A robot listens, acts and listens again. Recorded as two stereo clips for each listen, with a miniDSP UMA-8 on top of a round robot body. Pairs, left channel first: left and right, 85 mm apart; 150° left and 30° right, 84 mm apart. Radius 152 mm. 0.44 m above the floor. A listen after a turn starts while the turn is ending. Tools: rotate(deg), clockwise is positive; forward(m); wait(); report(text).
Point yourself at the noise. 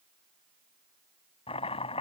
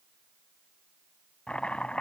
rotate(-70)
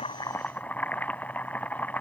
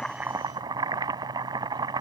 rotate(-15)
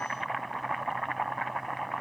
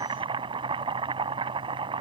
report("Found it: chopping, straight ahead.")